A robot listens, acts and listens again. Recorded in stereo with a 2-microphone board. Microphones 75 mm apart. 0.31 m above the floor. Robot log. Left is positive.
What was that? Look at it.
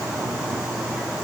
cmd idle
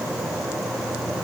cmd idle
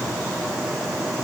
end: I can't make out anything to turn to.